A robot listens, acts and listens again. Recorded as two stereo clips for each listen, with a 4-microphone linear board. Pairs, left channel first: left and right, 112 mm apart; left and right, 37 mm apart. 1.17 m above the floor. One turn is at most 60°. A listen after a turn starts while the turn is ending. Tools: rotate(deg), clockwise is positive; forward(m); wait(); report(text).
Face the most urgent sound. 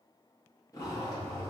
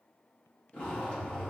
wait()
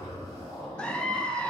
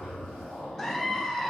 rotate(-30)
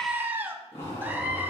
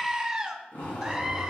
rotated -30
rotate(20)
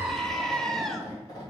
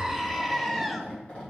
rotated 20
report("Facing the scream, under 1 m away.")